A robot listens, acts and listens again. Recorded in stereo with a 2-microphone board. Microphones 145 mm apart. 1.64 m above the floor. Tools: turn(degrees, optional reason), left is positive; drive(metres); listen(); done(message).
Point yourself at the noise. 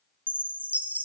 turn(degrees=-30)
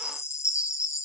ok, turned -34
turn(degrees=20, reason="So it is at 20° left.")
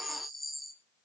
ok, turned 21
done("Found it: a chime, straight ahead.")